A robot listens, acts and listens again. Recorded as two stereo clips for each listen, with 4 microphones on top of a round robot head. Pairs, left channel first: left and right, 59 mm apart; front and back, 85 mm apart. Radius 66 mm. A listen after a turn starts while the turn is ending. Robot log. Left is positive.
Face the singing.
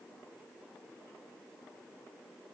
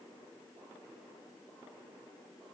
cmd idle
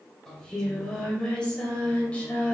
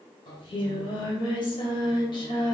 note: The singing: 25° left.
cmd yaw +25
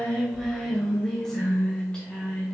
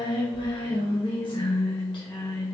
note: The singing is now 15° left.
cmd yaw +15
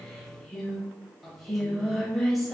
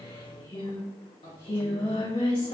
end: Facing the singing.